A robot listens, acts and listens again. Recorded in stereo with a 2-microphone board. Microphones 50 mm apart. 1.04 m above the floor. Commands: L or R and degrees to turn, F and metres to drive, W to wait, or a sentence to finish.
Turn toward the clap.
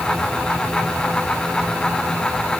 W
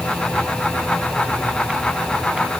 W
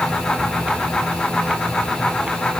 I can't make out a clap to turn to.